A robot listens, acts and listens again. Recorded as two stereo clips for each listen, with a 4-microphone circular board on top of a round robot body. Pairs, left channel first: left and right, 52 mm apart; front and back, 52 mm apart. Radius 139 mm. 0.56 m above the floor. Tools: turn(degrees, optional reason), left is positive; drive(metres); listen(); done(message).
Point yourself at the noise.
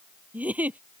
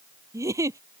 turn(degrees=-155, reason="The giggle: 155° right.")
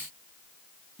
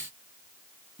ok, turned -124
turn(degrees=-30, reason="The giggle is now 30° right.")
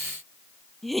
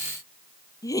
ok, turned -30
done("Facing the giggle.")